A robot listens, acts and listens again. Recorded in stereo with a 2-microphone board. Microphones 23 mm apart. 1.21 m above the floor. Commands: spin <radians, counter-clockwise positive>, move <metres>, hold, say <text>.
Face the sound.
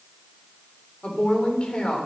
spin 0.96
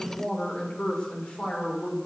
spin 1.05
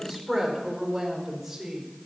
say Facing the woman speaking, over 4 m away.